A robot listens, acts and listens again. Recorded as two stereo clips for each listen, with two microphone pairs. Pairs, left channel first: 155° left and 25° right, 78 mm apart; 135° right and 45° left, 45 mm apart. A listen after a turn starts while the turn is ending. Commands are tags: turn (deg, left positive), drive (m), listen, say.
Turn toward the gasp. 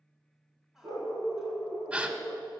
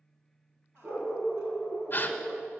<turn deg="-100"/>
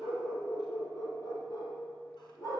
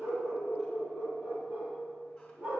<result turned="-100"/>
<say>I heard a gasp from this way, but can't make it out now.</say>